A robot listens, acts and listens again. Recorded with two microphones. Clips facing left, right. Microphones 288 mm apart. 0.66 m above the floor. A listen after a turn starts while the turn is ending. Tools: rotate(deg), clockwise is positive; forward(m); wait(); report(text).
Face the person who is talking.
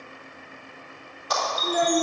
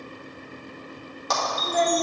rotate(-30)
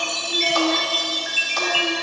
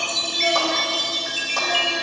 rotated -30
wait()
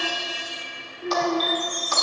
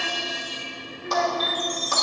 rotate(-135)
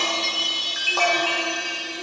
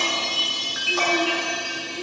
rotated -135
wait()
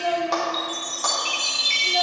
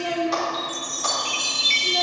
rotate(25)
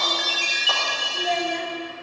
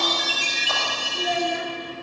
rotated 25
report("Found it: a child speaking, straight ahead.")